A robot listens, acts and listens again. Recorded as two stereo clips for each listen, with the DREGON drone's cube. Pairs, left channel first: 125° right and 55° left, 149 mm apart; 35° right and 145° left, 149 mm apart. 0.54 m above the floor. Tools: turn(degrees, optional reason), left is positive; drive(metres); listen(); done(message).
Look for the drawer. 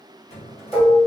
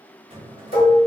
turn(degrees=-165, reason="The drawer: 165° right.")
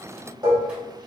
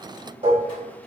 listen()
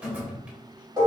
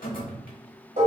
turn(degrees=-25, reason="The drawer is now 25° right.")
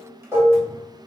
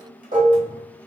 listen()
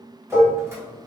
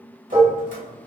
turn(degrees=-15, reason="The drawer is now 15° right.")
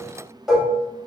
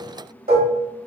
listen()
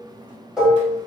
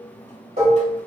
done("Facing the drawer.")